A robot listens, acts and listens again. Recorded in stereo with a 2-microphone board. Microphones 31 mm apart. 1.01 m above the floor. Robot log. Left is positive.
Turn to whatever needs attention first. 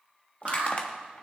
note: The alarm: about 40° right or 140° right.
cmd yaw -40
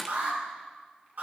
note: So it is at 100° right.
cmd yaw -100
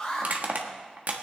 note: The alarm is now 20° left.
cmd yaw +20
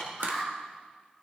end: Facing the alarm.